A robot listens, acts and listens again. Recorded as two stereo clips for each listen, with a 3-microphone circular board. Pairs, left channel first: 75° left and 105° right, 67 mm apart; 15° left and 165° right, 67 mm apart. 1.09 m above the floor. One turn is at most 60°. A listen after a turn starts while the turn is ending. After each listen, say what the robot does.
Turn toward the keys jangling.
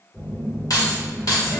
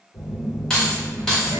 Turn 60° left.
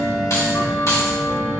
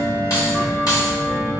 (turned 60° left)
Turn 40° left.
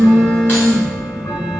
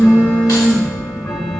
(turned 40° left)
Keep listening.
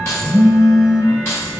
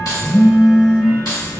Turn 25° left.
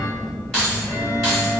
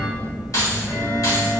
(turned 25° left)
Found it: keys jangling, straight ahead, 2 to 4 m away.